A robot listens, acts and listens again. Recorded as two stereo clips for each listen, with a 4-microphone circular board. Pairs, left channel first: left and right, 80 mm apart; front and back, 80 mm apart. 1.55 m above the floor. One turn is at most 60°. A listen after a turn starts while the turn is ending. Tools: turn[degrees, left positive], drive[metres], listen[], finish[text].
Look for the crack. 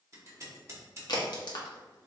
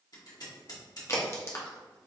Thought: The crack: 55° left.
Action: turn[55]
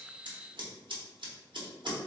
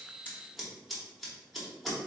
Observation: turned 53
Action: finish[Facing where the crack came from. I can't hear it now.]